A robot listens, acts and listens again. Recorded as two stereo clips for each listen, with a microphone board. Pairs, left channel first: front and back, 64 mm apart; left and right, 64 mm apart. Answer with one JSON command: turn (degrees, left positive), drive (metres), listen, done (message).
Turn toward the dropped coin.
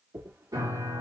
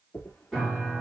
{"turn": 140}
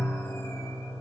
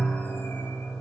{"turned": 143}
{"done": "Facing where the dropped coin came from. I can't hear it now."}